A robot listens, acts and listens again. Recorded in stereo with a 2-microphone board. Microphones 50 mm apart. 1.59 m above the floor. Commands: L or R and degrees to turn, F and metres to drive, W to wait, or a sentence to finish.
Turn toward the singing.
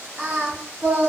R45
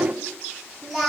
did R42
R10
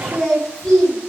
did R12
Found it: singing, straight ahead.